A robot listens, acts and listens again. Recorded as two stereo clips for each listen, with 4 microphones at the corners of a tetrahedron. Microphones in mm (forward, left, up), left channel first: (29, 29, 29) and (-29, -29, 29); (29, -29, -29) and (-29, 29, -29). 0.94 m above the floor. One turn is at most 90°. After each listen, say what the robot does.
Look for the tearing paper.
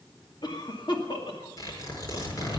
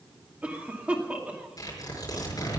Found it: tearing paper, straight ahead, over 4 m away.